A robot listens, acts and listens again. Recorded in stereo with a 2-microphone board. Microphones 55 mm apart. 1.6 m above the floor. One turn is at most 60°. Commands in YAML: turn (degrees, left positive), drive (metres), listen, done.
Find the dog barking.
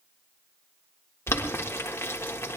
listen: true
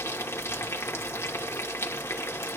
listen: true
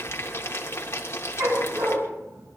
turn: -60
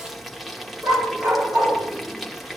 turn: -50
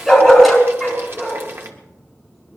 done: "Found it: a dog barking, straight ahead."